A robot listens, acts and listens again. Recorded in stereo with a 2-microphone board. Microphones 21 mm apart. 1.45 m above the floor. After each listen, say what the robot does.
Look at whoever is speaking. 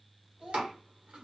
Turn 60° right.
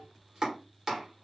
Keep listening.
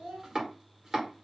Turn 55° right.
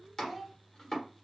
Found it: a child speaking, straight ahead.